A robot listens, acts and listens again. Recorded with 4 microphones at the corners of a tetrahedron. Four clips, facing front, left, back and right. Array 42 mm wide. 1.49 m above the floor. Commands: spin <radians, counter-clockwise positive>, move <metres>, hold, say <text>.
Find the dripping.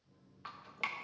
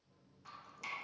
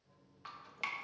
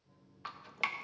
spin -1.40
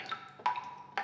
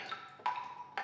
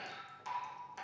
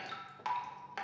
spin 0.17
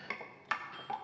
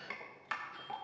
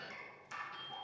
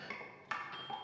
say Found it: dripping, straight ahead, 1 to 2 m away.